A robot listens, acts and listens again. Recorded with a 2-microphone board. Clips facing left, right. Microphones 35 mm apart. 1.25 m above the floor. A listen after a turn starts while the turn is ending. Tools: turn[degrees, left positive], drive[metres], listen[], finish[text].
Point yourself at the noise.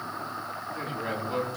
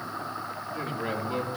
Thought: The man speaking: about 20° right or 160° right.
Action: turn[-20]
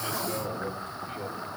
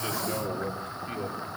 Thought: So it is at 130° right.
Action: turn[-130]
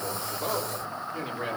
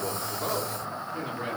Thought: The man speaking is now 15° left.
Action: turn[15]
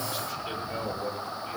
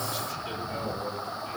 Action: finish[Facing the man speaking, over 4 m away.]